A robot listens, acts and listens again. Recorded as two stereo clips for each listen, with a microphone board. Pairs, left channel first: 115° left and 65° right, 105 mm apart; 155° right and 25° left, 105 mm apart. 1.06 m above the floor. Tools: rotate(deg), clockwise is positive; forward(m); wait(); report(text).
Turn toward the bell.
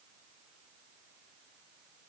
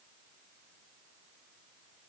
wait()
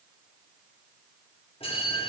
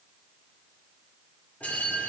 rotate(-125)
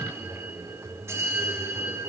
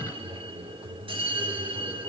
report("Found it: a bell, straight ahead.")